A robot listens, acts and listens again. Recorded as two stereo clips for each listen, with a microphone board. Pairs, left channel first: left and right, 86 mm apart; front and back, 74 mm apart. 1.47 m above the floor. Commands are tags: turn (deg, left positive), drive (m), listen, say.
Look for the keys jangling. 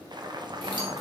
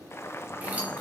<turn deg="-110"/>
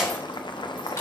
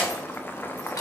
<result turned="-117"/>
<turn deg="25"/>
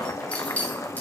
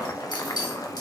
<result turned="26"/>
<turn deg="20"/>
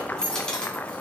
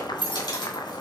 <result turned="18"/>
<turn deg="10"/>
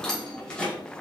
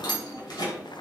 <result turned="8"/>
<turn deg="15"/>
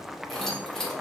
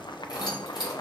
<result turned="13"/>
<say>Found it: keys jangling, straight ahead.</say>